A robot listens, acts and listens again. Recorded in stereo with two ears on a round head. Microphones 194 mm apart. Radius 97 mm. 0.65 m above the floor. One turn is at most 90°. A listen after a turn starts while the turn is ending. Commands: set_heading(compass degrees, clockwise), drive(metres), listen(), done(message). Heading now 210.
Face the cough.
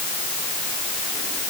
listen()
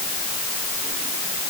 listen()
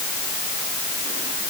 done("I can't make out a cough.")